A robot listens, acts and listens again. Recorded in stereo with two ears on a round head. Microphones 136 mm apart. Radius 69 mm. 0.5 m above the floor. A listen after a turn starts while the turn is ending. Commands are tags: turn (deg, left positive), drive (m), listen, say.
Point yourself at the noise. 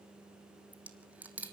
<turn deg="-30"/>
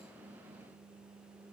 <listen/>
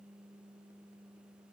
<say>I heard a dropped coin, but can't make it out now. It was about 20° left or 140° right.</say>